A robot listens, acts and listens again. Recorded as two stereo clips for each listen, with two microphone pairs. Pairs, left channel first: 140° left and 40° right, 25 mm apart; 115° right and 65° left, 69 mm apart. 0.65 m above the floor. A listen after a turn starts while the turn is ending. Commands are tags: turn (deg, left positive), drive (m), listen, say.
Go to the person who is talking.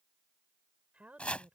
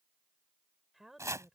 <turn deg="-20"/>
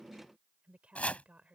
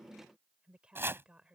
<turn deg="-10"/>
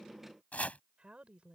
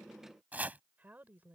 <drive m="1.0"/>
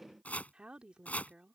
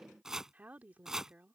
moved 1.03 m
<drive m="1.0"/>
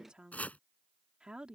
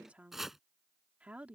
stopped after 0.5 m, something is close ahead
<say>Arrived at the woman speaking, straight ahead.</say>